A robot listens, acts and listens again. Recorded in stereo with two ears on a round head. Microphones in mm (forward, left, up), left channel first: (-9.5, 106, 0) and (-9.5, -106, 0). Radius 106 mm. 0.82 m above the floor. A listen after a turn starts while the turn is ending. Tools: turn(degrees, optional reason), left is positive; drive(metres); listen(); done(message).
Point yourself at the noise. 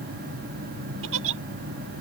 turn(degrees=-60, reason="The giggle: about 60° right or 120° right.")
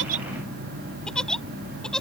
done("Found it: a giggle, straight ahead.")